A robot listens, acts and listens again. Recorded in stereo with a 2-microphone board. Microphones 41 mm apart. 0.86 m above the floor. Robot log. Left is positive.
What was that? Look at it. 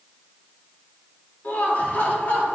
note: The laughter: about 40° left or 140° left.
cmd yaw +40
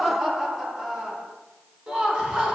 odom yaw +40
note: So it is at 20° right.
cmd yaw -20
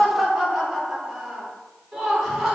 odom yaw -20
end: Found it: laughter, straight ahead, 2 to 4 m away.